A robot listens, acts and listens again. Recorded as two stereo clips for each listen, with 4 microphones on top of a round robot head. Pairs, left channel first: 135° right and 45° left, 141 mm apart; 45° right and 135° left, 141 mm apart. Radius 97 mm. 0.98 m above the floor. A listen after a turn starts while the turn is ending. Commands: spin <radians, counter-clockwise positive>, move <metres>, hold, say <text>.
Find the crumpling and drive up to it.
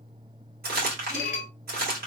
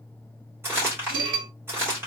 spin 1.05
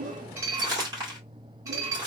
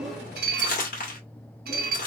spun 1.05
spin -0.35
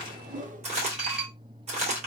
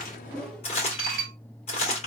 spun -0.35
move 1.0
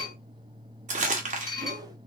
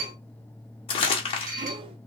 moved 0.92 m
move 1.0
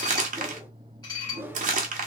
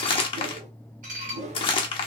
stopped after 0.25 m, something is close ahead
spin 0.17
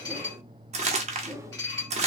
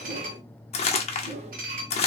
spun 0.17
say I am next to the crumpling.